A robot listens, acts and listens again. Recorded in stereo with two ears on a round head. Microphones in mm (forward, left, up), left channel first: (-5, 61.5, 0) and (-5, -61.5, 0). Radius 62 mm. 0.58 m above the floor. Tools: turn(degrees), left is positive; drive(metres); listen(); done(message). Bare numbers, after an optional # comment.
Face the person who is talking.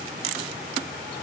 listen()
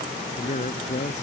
# The man speaking: about 50° left or 130° left.
turn(50)
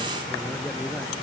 listen()
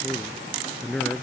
done("Facing the man speaking.")